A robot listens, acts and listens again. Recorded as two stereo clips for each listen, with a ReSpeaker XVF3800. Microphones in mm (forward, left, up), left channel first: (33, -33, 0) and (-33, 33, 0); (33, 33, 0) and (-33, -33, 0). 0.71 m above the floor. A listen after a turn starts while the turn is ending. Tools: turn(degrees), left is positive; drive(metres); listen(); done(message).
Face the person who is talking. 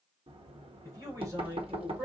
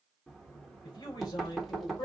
turn(degrees=80)
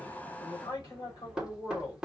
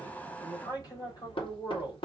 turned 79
done("Facing the man speaking, 2 to 4 m away.")